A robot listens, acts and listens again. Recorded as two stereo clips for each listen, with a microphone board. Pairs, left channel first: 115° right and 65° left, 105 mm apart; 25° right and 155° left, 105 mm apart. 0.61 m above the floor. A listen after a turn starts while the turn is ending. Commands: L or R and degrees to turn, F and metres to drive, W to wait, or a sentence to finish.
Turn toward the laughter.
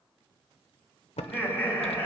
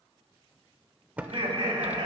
L180
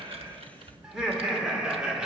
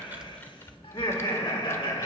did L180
R10
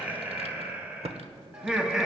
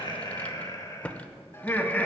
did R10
Facing the laughter.